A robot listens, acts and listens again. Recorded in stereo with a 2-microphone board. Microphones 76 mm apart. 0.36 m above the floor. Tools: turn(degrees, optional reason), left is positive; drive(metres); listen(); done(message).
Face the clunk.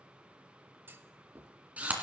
turn(degrees=-30, reason="The clunk: about 30° right or 150° right.")
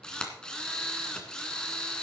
listen()
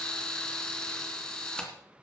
done("I heard a clunk, but can't make it out now. It was about straight ahead or 120° right.")